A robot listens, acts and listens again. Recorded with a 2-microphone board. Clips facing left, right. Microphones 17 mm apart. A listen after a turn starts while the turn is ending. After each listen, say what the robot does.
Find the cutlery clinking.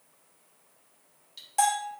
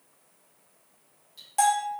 Turn 30° left.
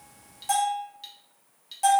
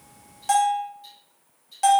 Turn 120° left.
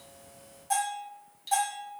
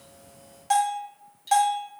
Turn 20° left.
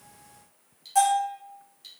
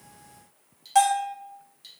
Facing the cutlery clinking.